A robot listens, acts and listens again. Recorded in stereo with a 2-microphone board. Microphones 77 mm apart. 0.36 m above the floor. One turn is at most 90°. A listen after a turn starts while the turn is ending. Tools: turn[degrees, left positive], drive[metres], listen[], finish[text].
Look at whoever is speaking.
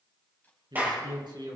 Thought: The man speaking: about 75° right or 105° right.
Action: turn[-75]
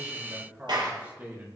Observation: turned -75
Thought: So it is at 20° right.
Action: turn[-20]
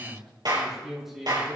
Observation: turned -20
Action: finish[Found it: a man speaking, straight ahead.]